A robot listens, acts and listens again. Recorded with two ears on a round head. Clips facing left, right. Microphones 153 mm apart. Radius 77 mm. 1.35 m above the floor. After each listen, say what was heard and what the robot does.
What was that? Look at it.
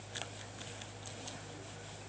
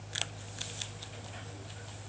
Keep listening.
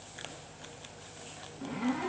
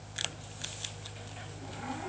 Turn 90° left.
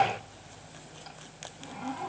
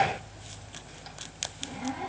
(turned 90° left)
So it is at 10° right. Turn 10° right.
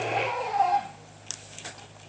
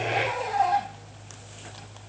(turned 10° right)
Facing the zipper.